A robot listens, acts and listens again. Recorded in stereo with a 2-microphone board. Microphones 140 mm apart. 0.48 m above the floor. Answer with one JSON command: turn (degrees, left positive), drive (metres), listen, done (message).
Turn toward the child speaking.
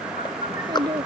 {"turn": -30}
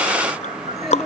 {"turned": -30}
{"done": "Found it: a child speaking, straight ahead."}